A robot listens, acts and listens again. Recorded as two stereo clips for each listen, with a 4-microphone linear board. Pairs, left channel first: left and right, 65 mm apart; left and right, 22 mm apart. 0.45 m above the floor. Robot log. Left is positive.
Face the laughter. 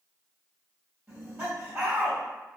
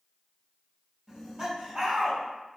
note: The laughter: about 15° right or 165° right.
cmd yaw -15
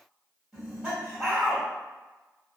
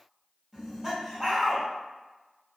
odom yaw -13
end: Facing the laughter.